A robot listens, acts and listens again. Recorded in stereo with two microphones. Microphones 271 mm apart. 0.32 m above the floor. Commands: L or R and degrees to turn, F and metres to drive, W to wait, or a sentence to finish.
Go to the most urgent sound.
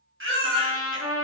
R50
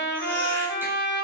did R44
W
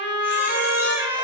W
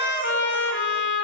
I heard a baby crying, but can't make it out now. It was about 5° right or 85° right. I did not reach it.